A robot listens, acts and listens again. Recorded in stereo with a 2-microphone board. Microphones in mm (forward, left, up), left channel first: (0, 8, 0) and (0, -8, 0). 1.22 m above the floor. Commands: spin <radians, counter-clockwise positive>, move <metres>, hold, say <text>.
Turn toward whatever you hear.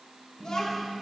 spin 1.05
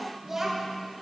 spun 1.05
spin -0.52
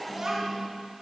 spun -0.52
spin -0.70
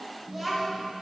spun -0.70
say Found it: a child speaking, straight ahead, 2 to 4 m away.